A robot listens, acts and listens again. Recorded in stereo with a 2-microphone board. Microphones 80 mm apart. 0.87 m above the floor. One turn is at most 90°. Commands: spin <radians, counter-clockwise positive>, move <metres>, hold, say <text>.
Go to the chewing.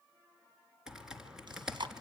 spin -1.57
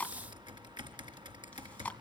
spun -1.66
spin 0.26
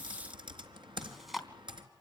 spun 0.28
move 1.0
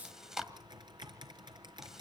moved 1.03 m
move 1.0
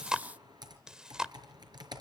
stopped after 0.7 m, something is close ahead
spin -0.17
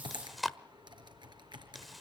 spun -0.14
say Arrived at the chewing, straight ahead.